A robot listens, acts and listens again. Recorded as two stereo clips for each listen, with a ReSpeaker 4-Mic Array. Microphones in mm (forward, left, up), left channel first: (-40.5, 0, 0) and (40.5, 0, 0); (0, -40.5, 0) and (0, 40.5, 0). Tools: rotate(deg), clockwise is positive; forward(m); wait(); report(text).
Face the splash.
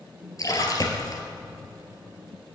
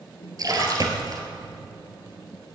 rotate(-135)
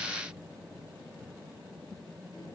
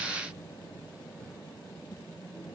report("Facing where the splash came from. I can't hear it now.")